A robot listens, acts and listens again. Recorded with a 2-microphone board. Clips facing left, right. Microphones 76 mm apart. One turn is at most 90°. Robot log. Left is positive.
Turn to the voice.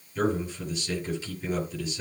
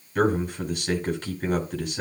note: The man speaking: about 60° right or 120° right.
cmd yaw -60
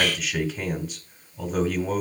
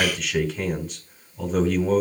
end: Facing the man speaking, over 4 m away.